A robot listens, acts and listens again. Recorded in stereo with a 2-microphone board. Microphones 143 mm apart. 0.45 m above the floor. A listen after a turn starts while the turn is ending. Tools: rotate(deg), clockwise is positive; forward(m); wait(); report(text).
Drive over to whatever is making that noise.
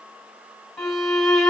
rotate(-30)
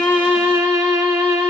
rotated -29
rotate(30)
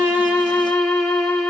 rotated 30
forward(1.0)
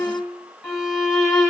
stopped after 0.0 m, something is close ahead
report("Something is in my way. I am facing the violin but have not reached it.")